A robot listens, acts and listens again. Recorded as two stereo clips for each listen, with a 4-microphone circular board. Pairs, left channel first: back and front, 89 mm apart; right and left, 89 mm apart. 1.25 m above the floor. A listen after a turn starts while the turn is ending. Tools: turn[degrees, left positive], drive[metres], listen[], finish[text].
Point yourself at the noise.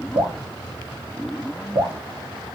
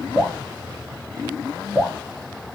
Action: finish[Facing the dripping, under 1 m away.]